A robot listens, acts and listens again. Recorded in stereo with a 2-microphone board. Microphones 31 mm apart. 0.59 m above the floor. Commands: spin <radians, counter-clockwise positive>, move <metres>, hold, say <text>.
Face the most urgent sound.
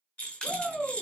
spin 0.87
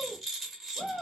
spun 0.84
spin 1.13
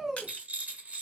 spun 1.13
say Facing the shout.